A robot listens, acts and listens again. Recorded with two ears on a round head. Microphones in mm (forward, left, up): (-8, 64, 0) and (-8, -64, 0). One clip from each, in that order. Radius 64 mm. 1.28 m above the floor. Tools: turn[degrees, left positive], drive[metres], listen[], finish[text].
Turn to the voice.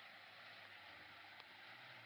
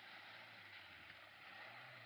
Action: listen[]
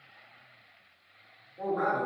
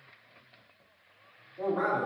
Action: turn[-30]
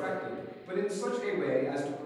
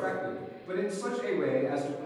Thought: So it is at 30° left.
Action: turn[30]
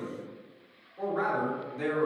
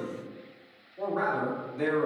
Action: finish[Found it: a man speaking, straight ahead.]